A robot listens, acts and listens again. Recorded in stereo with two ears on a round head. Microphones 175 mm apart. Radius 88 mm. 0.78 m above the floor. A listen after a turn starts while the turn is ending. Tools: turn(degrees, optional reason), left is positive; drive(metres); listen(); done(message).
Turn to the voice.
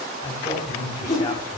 turn(degrees=20, reason="The man speaking: about 20° left or 160° left.")
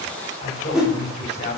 turn(degrees=140, reason="So it is at 140° left.")
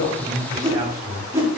turn(degrees=-25, reason="The man speaking is now 25° right.")
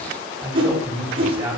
turn(degrees=-10, reason="The man speaking is now 10° right.")
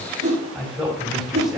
done("Facing the man speaking, 2 to 4 m away.")